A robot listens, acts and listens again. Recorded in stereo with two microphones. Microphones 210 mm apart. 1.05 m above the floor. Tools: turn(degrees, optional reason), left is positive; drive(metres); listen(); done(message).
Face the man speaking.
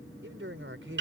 turn(degrees=-70, reason="The man speaking: about 70° right or 110° right.")
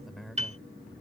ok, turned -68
done("Facing the man speaking.")